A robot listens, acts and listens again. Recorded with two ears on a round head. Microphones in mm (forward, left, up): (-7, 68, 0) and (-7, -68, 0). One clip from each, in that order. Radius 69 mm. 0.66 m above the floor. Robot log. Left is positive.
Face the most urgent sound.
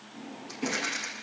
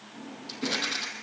cmd idle
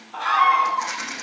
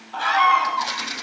note: The scream: about 65° right or 115° right.
cmd yaw -65
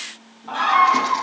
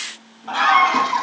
note: So it is at 45° right.
cmd yaw -45
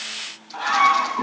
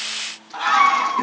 note: The scream is now 15° right.
cmd yaw -15
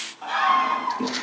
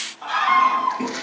end: Found it: a scream, straight ahead, 2 to 4 m away.